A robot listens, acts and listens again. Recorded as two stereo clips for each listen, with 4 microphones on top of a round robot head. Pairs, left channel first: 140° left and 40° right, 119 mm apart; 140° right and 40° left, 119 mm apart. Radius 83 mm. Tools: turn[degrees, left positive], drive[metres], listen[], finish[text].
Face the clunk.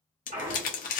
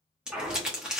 Thought: The clunk: 45° right.
Action: turn[-45]
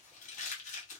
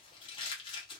Action: finish[I heard a clunk from this way, but can't make it out now.]